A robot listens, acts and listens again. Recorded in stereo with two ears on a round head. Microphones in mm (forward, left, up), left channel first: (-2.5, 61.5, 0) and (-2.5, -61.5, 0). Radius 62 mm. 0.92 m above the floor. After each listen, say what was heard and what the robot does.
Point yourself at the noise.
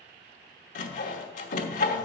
The sawing: about 60° left or 120° left. Turn 60° left.
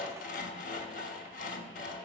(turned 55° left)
So it is at 60° left. Turn 60° left.
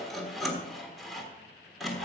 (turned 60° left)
Facing the sawing, 1 to 2 m away.